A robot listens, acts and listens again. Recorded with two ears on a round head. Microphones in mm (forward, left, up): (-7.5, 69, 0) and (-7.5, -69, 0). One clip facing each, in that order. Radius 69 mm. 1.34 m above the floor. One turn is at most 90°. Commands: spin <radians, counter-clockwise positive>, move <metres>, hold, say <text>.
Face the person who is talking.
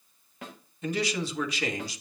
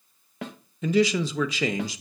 spin -1.22
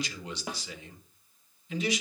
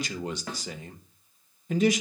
spin -0.70
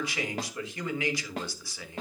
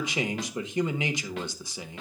spin -0.26
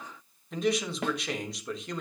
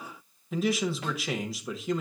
say Facing the man speaking, 1 to 2 m away.